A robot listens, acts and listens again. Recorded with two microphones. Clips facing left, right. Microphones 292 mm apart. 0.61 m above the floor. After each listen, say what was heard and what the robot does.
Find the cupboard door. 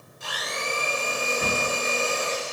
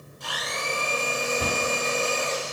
The cupboard door: about 45° right or 135° right. Turn 45° right.
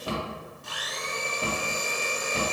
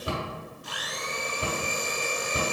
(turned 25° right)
So it is at 20° right. Turn 20° right.
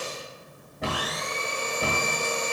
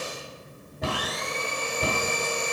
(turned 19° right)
Facing the cupboard door.